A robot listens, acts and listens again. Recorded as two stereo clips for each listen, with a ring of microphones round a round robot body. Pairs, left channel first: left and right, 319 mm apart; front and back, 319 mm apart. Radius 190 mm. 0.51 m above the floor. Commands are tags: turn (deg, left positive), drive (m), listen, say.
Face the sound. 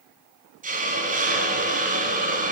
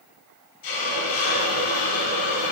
<turn deg="-25"/>
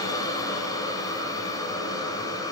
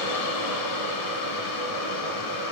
<turn deg="10"/>
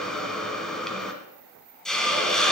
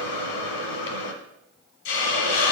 <say>Facing the hiss, 1 to 2 m away.</say>